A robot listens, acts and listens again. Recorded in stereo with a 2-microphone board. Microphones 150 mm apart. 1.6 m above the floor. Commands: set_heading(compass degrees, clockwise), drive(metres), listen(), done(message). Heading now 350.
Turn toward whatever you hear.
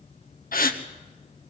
set_heading(280)
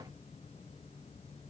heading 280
listen()
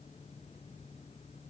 done("I heard a gasp, but can't make it out now. It was about straight ahead or 40° left.")